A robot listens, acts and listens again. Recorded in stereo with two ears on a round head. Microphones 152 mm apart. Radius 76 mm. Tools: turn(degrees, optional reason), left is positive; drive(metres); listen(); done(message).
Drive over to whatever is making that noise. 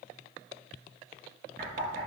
turn(degrees=-45, reason="The knocking: about 45° right or 135° right.")
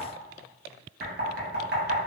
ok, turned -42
turn(degrees=-85, reason="So it is at 85° right.")
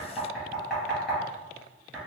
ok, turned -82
drive(metres=1.0)
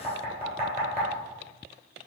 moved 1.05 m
turn(degrees=-20, reason="The knocking is now 20° right.")
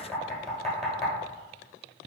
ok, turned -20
drive(metres=1.0)
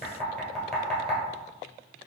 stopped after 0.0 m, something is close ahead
done("Arrived at the knocking, straight ahead.")